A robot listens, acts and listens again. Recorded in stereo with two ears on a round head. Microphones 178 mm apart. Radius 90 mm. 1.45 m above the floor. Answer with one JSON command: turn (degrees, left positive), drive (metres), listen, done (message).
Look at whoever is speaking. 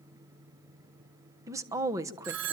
{"turn": -15}
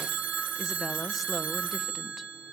{"listen": true}
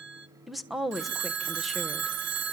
{"done": "Facing the woman speaking, 1 to 2 m away."}